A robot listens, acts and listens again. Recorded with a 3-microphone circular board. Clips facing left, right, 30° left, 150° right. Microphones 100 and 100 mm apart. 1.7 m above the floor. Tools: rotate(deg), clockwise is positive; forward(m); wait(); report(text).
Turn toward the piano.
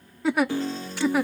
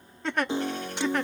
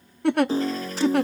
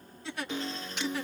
rotate(25)
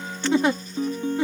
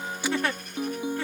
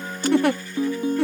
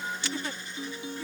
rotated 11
rotate(10)
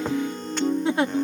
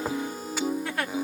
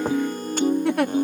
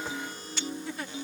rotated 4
report("Found it: a piano, straight ahead.")